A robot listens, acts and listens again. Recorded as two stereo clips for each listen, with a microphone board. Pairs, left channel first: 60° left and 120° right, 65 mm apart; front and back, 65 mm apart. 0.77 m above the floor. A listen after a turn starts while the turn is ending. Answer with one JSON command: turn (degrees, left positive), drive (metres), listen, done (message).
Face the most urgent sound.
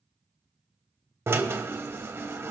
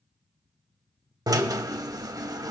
{"listen": true}
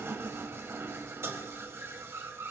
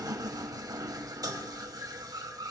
{"listen": true}
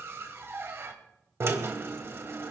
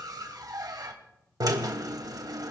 {"done": "I can't make out anything urgent to turn to."}